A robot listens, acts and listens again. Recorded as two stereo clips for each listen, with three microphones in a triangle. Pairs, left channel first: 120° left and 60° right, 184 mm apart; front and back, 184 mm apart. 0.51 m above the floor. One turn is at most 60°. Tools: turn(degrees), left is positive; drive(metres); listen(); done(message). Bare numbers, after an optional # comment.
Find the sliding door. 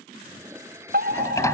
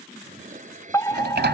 # The sliding door: 170° right.
turn(-60)
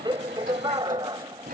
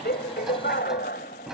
# The sliding door is now 95° right.
turn(-60)
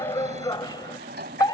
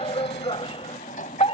# The sliding door is now 40° right.
turn(-40)
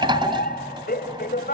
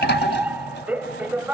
done("Facing the sliding door.")